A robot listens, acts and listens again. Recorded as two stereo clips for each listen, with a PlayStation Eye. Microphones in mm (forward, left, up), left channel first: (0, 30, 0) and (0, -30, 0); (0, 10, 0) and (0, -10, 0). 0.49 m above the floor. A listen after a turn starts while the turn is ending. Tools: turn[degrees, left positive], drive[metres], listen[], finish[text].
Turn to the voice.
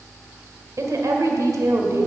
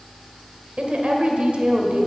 Thought: The woman speaking: about 65° right or 115° right.
Action: turn[-65]
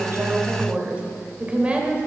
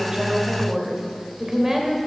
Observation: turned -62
Thought: So it is at 20° right.
Action: turn[-20]
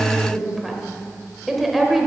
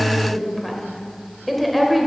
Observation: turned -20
Action: finish[Facing the woman speaking, 1 to 2 m away.]